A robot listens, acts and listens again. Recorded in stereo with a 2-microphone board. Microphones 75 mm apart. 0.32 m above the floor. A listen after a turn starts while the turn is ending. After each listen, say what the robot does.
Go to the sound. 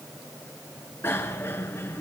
Turn 30° left.
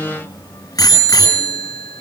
Turn 120° left.
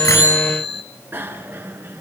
Turn 30° right.
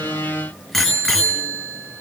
Drive 1.0 m forward.
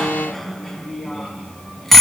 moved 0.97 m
Drive 1.0 m forward.
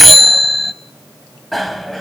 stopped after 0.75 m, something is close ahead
Arrived at the bicycle bell, straight ahead.